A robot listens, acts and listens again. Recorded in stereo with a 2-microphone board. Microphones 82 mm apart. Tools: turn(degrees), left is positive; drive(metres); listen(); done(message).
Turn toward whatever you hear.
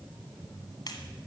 turn(degrees=50)
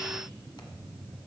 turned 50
listen()
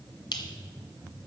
turn(degrees=70)
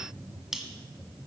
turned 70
done("Found it: a finger snap, straight ahead.")